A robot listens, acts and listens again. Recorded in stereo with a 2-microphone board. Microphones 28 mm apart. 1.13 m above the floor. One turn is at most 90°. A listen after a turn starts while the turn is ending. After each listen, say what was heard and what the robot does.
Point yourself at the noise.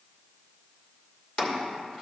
The chopping: about 55° left or 125° left. Turn 55° left.
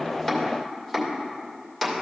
Facing the chopping, 1 to 2 m away.